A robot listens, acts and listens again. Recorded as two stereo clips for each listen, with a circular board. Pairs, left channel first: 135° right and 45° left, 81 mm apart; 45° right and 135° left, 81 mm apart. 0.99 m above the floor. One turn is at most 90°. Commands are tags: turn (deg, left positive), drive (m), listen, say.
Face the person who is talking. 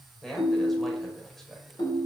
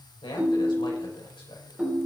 <turn deg="-50"/>
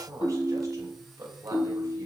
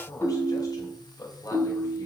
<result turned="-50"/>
<say>Found it: a man speaking, straight ahead, over 4 m away.</say>